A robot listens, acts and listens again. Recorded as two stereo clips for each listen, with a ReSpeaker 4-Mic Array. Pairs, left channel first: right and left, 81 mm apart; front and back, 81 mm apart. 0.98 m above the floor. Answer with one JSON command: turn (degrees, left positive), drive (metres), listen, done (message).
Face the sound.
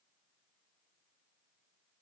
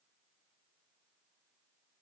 {"listen": true}
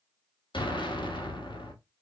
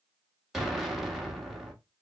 {"turn": -95}
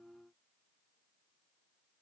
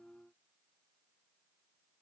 {"done": "Facing where the explosion came from. I can't hear it now."}